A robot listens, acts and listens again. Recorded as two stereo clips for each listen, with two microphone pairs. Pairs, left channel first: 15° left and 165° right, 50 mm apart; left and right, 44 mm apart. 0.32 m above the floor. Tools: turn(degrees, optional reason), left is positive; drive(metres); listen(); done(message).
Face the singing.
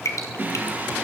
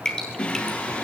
turn(degrees=150, reason="The singing: 150° left.")
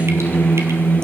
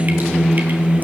turn(degrees=-25, reason="The singing is now 25° right.")
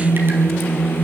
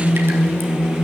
turn(degrees=-20, reason="The singing is now 20° right.")
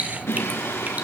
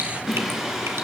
turn(degrees=-15, reason="The singing is now 15° right.")
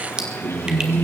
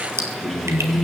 done("Facing the singing.")